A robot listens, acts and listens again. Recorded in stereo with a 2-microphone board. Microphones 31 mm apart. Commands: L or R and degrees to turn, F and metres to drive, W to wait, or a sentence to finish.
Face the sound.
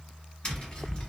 L30
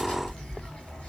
L110
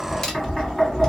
L10
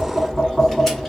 Facing the tapping, 1 to 2 m away.